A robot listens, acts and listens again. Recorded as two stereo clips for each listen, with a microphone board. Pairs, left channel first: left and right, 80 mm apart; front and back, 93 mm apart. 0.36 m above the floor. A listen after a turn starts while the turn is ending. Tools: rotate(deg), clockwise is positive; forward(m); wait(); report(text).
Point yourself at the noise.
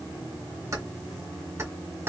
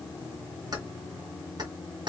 rotate(150)
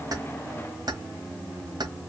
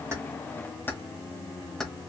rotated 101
rotate(85)
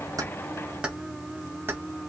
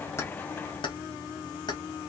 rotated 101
rotate(30)
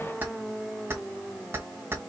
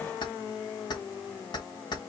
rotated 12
rotate(30)
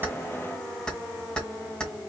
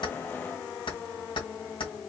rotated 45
rotate(-10)
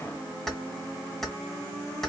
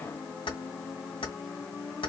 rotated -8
report("Found it: keys jangling, straight ahead, 1 to 2 m away.")